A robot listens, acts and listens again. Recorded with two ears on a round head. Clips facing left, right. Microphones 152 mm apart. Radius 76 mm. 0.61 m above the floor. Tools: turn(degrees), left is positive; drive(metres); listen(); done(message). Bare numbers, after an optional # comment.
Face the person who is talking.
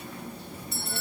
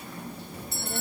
# The child speaking: about 50° right or 130° right.
turn(-50)
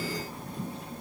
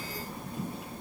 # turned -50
done("Found it: a child speaking, straight ahead.")